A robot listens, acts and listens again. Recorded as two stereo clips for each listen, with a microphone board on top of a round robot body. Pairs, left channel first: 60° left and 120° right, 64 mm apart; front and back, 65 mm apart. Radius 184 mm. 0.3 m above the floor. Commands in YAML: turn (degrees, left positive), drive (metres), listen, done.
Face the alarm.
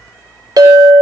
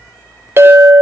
listen: true
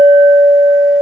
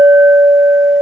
listen: true
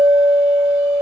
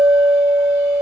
done: "I can't make out an alarm to turn to."